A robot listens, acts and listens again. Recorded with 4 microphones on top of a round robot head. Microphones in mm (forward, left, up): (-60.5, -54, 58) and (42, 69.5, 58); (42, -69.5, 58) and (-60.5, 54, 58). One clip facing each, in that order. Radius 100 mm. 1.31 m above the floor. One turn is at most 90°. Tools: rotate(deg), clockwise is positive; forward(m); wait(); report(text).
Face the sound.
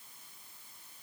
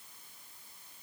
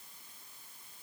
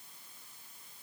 wait()
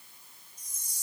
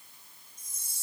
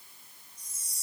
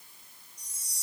rotate(90)
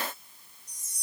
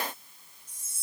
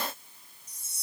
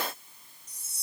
rotate(80)
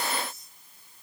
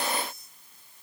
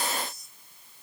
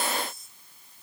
wait()
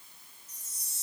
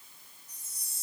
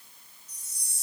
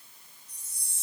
report("Found it: a chime, straight ahead.")